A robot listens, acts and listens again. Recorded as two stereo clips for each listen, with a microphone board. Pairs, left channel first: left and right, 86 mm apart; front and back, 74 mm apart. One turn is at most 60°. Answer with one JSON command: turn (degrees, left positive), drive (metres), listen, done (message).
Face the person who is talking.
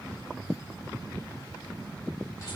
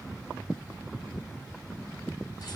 {"listen": true}
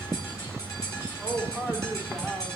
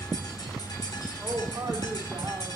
{"turn": 60}
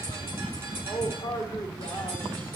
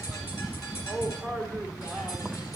{"turn": 60}
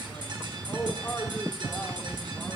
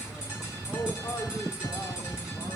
{"turn": 25}
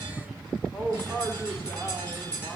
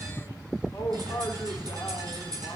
{"turn": -10}
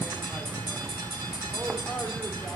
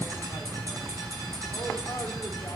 {"listen": true}
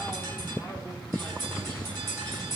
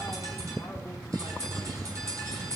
{"listen": true}
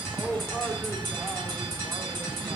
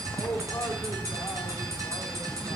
{"done": "Found it: a man speaking, straight ahead."}